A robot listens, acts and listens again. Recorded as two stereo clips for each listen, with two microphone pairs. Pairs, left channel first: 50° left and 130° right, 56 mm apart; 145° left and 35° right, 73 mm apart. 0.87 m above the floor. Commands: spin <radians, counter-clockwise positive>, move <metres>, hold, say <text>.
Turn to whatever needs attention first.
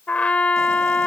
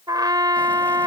hold
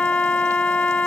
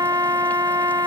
hold
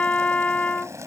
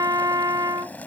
say I can't make out anything urgent, only boiling and a trumpet.